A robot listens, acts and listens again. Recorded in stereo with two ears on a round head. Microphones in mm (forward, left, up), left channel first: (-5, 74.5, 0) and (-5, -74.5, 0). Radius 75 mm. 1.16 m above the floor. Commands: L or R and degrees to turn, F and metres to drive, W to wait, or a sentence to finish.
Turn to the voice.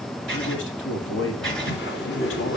L90
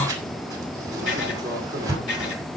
W
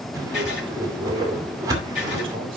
R35
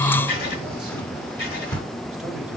W
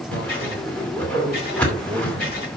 Facing the man speaking.